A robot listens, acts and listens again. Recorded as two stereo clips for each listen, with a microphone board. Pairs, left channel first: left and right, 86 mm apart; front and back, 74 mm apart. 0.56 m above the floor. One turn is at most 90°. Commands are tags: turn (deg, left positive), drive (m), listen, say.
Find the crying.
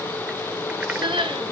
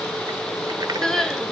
<turn deg="-85"/>
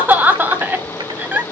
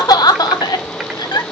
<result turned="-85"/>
<turn deg="-20"/>
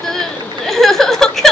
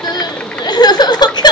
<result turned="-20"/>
<say>Found it: crying, straight ahead.</say>